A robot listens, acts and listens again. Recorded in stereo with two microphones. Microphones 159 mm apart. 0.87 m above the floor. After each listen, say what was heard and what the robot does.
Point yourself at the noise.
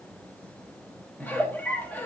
Turn 30° left.
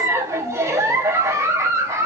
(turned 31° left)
So it is at 20° right. Turn 20° right.
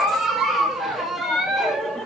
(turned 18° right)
Found it: a giggle, straight ahead, under 1 m away.